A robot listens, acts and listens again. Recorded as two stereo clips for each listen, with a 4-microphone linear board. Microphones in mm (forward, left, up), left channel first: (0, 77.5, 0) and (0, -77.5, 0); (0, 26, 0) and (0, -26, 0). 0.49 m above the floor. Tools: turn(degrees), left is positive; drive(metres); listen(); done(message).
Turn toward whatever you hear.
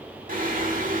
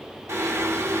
turn(degrees=-55)
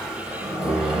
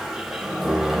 done("Facing the singing.")